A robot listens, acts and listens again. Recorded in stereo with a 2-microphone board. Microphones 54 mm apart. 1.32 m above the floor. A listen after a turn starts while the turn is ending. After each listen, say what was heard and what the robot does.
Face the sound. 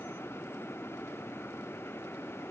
Keep listening.
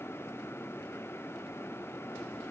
Keep listening.
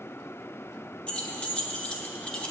The keys jangling: about 20° left or 160° left. Turn 20° left.
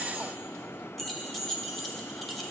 Facing the keys jangling.